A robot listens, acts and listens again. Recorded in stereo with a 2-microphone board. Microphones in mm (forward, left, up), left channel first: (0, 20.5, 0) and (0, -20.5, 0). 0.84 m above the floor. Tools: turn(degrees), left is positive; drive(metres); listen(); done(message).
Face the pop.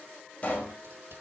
turn(degrees=30)
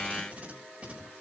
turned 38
listen()
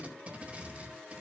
done("I heard a pop, but can't make it out now. It was about 5° right or 110° left.")